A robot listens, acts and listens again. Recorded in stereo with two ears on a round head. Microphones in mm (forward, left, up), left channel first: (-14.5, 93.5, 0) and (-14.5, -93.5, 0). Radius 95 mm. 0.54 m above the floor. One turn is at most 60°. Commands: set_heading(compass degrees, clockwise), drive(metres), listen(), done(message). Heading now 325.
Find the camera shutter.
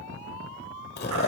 listen()
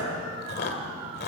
listen()
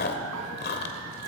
done("I can't make out a camera shutter to turn to.")